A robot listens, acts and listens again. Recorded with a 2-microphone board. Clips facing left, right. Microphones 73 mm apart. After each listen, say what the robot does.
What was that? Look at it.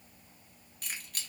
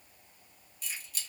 Turn 55° left.
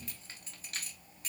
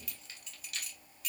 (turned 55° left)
Turn 45° left.
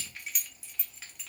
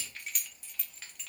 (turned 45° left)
Found it: keys jangling, straight ahead, under 1 m away.